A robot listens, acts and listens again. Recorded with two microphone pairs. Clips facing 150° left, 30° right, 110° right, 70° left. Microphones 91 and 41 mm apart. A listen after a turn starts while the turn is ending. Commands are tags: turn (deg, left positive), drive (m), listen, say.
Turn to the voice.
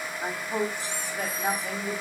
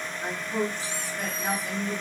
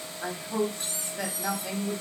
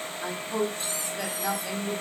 <turn deg="155"/>
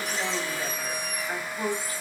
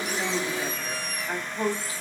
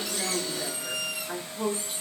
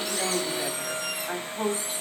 <turn deg="35"/>
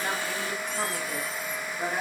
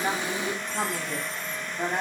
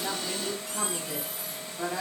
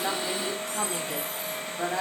<say>Facing the woman speaking.</say>